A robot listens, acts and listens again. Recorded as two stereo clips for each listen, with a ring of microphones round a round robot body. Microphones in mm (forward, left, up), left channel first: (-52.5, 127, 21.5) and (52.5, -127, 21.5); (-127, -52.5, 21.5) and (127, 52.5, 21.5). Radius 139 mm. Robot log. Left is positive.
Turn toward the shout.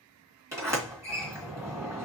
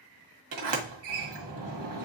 cmd idle
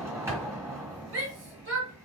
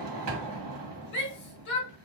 note: The shout: 110° right.
cmd yaw -110
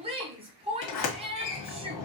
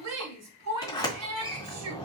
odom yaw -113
end: Facing the shout.